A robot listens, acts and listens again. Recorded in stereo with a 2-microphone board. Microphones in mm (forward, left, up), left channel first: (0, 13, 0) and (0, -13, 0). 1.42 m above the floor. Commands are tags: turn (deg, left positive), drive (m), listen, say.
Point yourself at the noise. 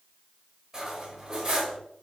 <turn deg="-20"/>
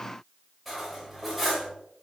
<say>Facing the cutlery clinking.</say>